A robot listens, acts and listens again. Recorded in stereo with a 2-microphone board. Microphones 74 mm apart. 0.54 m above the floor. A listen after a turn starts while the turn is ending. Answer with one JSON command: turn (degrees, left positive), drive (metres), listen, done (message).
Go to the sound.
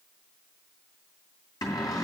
{"turn": 65}
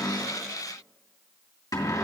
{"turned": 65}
{"turn": 55}
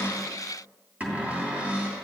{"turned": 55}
{"turn": -20}
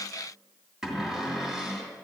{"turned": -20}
{"turn": -10}
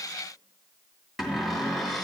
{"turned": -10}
{"drive": 1.0}
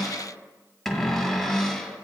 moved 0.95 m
{"drive": 1.0}
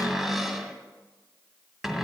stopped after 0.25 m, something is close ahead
{"done": "I am next to the cupboard door."}